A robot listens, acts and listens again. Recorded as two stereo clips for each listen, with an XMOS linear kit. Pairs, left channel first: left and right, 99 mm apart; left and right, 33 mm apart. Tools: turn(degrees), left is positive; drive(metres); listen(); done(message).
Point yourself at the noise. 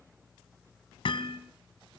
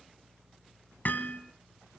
turn(degrees=65)
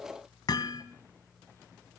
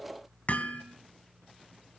turn(degrees=45)
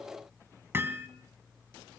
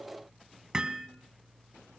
turn(degrees=-25)
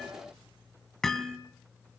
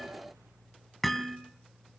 done("Facing the hammering, 2 to 4 m away.")